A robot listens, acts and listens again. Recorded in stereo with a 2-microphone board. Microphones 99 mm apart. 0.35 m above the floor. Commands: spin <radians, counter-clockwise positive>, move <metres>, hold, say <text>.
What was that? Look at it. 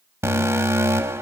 spin -0.44
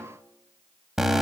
say Found it: an alarm, straight ahead.